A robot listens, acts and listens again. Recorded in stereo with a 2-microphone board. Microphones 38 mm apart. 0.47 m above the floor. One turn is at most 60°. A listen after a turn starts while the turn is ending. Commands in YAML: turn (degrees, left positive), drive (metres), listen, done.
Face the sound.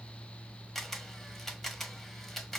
turn: 30
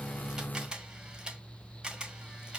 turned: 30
turn: -25
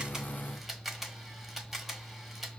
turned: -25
done: "Facing the camera shutter, under 1 m away."